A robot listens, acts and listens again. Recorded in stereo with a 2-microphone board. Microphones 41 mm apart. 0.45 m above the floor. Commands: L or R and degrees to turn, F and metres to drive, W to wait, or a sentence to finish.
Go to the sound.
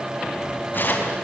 L45
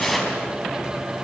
F1.0
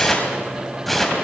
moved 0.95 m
F1.0
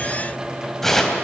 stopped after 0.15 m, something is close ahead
L10
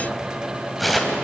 Something is in my way. I am facing the tearing paper but have not reached it.